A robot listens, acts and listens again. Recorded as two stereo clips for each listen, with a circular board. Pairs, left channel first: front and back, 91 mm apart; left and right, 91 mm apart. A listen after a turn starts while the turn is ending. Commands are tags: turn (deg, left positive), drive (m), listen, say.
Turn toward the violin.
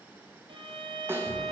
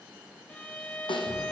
<turn deg="165"/>
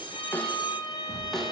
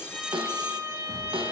<turn deg="-35"/>
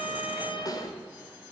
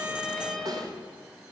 <say>Found it: a violin, straight ahead, under 1 m away.</say>